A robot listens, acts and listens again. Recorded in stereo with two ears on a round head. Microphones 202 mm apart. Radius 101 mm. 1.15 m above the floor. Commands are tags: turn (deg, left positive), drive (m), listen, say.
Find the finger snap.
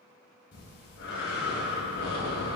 <listen/>
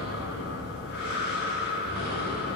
<listen/>
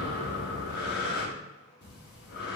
<say>I can't make out a finger snap to turn to.</say>